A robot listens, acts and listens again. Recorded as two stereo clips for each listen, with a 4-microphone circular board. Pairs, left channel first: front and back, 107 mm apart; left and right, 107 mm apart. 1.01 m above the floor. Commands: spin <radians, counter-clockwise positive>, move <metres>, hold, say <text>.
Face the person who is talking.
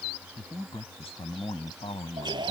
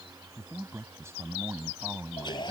spin -0.44
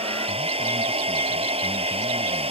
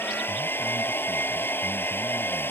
hold
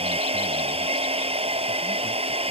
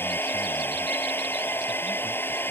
hold
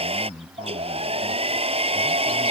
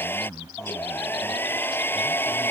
say Facing the man speaking.